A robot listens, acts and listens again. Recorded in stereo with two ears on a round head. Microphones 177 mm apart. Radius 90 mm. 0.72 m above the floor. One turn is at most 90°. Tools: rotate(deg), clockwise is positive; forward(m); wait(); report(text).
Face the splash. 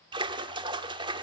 rotate(25)
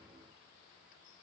wait()
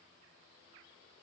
report("I heard a splash, but can't make it out now. It was about straight ahead or 130° right.")